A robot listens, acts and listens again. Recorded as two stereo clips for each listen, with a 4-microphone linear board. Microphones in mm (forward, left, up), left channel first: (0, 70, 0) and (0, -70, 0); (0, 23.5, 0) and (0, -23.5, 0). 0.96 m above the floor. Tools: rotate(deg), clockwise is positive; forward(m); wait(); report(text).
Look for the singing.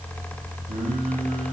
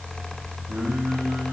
rotate(60)
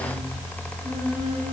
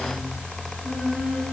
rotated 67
rotate(-20)
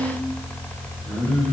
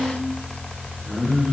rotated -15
rotate(-15)
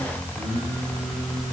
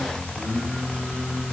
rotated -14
report("Facing the singing.")